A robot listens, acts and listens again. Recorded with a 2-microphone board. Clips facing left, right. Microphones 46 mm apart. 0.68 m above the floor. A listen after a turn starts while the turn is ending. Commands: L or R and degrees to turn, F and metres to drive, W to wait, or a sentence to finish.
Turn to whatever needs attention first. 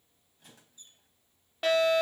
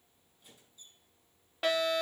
L30
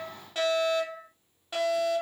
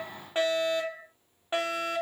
R35
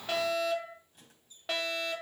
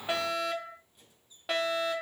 Found it: a fire alarm, straight ahead, 2 to 4 m away.